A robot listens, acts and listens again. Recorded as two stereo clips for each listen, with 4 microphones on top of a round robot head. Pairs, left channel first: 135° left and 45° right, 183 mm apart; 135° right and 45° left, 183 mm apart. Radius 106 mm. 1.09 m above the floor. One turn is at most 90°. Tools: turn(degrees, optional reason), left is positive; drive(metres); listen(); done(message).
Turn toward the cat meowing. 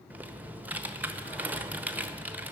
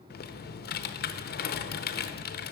listen()
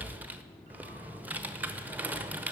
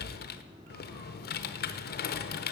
listen()
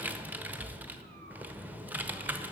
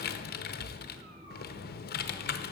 done("I can't make out a cat meowing, only typing on a keyboard.")